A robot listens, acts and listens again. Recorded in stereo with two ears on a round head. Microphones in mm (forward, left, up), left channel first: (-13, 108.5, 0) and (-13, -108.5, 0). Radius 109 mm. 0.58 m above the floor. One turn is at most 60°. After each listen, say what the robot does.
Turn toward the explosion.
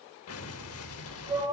Turn 60° left.
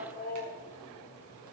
Keep listening.
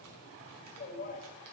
I heard an explosion, but can't make it out now. It was about straight ahead or 60° left.